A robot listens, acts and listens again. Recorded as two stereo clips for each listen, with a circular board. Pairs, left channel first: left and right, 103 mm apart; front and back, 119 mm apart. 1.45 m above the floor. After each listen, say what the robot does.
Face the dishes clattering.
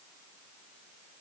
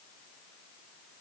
Keep listening.
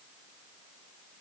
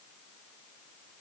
Keep listening.
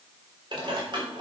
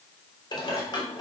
Turn 50° right.
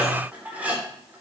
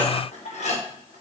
Turn 15° right.
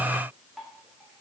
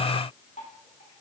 Keep listening.
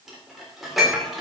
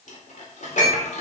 Found it: dishes clattering, straight ahead, 2 to 4 m away.